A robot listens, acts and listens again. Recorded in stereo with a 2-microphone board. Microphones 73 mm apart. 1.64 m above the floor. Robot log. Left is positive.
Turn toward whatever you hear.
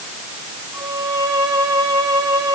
note: The violin: about 55° right or 125° right.
cmd yaw -55
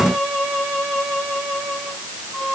end: Found it: a violin, straight ahead.